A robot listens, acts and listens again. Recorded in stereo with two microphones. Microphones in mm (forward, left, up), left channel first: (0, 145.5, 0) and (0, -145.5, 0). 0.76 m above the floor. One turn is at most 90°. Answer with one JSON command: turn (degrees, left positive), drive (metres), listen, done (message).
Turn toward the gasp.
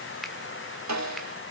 {"listen": true}
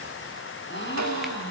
{"turn": 40}
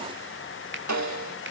{"listen": true}
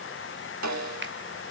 {"done": "I heard a gasp, but can't make it out now. It was about straight ahead or 100° left."}